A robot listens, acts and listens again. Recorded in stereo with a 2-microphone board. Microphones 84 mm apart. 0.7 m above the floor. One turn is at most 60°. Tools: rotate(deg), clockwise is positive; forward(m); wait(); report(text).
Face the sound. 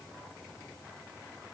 wait()
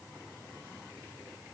wait()
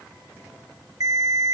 rotate(45)
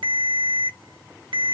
rotate(60)
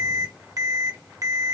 rotate(45)
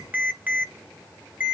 rotate(20)
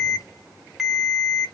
report("Found it: a ringtone, straight ahead, 1 to 2 m away.")